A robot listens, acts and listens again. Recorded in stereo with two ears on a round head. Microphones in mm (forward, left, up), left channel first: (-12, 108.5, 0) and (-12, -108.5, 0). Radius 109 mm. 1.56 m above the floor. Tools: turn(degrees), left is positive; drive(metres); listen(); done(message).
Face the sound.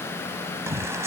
turn(degrees=-30)
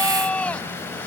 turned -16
done("Facing the shout.")